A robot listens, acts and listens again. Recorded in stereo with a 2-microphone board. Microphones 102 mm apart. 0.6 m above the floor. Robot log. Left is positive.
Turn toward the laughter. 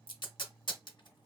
cmd idle
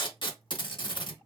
cmd idle
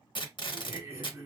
note: The laughter: about 30° right or 150° right.
cmd yaw -30
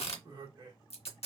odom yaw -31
note: So it is at 120° right.
cmd yaw -120
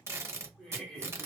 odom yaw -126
note: The laughter is now 10° left.
cmd yaw +10
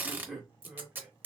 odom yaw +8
end: Facing the laughter.